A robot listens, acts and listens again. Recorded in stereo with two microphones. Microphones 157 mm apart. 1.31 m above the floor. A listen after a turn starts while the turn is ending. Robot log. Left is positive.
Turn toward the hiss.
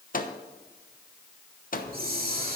note: The hiss: about 70° right or 110° right.
cmd yaw -70
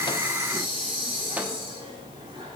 note: So it is at 35° right.
cmd yaw -35
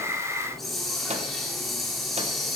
end: Found it: a hiss, straight ahead.